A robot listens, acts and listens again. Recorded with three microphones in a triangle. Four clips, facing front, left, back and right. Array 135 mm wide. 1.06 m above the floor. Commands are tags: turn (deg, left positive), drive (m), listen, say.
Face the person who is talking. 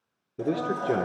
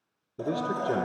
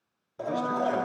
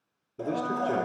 <turn deg="10"/>
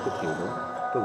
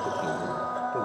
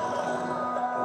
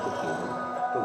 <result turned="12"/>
<listen/>
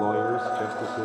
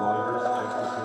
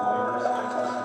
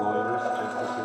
<listen/>
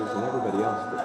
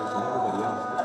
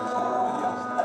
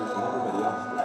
<say>Facing where the man speaking came from. I can't hear it now.</say>